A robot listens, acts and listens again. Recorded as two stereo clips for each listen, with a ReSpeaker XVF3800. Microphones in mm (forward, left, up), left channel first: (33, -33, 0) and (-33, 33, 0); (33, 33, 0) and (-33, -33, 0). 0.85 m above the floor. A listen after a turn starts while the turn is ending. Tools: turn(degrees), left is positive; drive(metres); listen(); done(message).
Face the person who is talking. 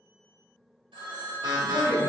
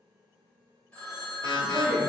turn(degrees=-65)
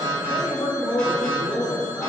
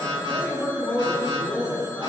done("Found it: a woman speaking, straight ahead, 1 to 2 m away.")